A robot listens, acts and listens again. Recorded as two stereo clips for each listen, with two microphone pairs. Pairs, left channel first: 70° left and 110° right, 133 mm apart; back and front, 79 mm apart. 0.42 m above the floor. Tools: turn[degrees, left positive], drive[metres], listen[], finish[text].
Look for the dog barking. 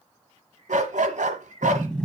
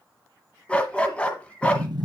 Thought: The dog barking: 105° right.
Action: turn[-105]
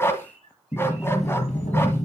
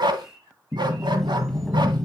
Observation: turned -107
Action: finish[Found it: a dog barking, straight ahead, 1 to 2 m away.]